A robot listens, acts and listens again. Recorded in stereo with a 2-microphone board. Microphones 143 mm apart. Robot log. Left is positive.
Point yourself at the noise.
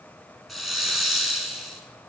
cmd yaw +30
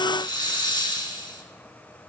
note: So it is at 150° left.
cmd yaw +150
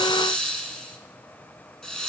end: Found it: a hiss, straight ahead, 1 to 2 m away.